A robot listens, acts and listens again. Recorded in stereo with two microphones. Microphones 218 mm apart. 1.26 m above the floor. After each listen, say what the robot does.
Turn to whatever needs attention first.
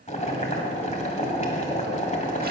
Keep listening.
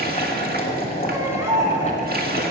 Turn 30° right.
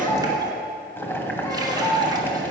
Turn 15° left.
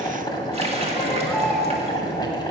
Keep listening.
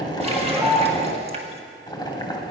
Facing the baby crying.